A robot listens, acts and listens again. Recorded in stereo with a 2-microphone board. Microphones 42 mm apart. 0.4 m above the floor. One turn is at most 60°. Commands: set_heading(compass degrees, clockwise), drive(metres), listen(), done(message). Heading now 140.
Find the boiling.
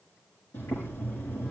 set_heading(80)
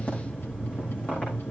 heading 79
set_heading(49)
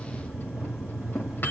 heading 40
done("Facing the boiling.")